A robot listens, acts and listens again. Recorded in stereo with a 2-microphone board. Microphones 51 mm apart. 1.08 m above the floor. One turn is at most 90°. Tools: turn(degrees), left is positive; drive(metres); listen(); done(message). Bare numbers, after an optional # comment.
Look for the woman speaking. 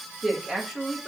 turn(30)
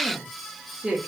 # So it is at 15° right.
turn(-15)
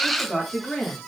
# The woman speaking is now 10° left.
turn(10)
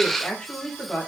# The woman speaking is now 20° left.
turn(20)
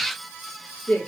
# The woman speaking is now 20° left.
turn(20)
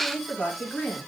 # The woman speaking is now 10° left.
turn(10)
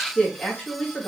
done("Facing the woman speaking.")